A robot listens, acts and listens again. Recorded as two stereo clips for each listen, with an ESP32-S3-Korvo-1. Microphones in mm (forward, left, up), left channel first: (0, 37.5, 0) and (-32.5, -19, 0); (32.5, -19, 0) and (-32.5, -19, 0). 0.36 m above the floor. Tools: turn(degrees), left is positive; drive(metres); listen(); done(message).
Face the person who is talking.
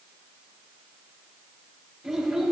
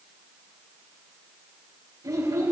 turn(degrees=165)
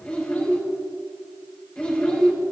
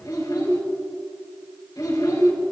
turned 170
turn(degrees=-10)
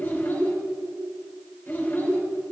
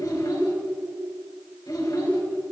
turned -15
done("Facing the child speaking, 2 to 4 m away.")